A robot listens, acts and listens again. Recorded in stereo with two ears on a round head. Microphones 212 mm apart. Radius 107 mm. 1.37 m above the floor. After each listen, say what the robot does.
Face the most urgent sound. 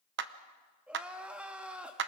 Turn 30° right.
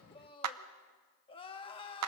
Turn 25° left.
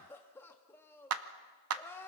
Turn 10° left.
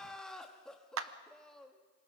Found it: crying, straight ahead.